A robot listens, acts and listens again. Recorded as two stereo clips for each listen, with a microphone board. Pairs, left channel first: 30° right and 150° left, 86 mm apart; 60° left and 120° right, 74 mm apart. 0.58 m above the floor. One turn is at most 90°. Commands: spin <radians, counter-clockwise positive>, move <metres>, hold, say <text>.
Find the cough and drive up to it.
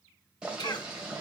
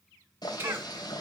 spin -1.05
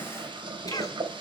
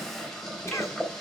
spin 0.17
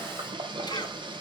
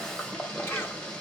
hold
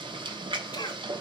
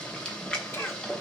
move 1.0
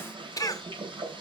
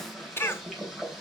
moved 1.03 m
spin 0.17
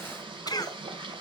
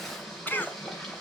move 1.0
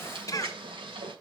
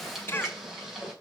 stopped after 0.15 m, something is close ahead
spin 0.17
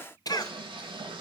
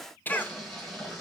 say I am next to the cough.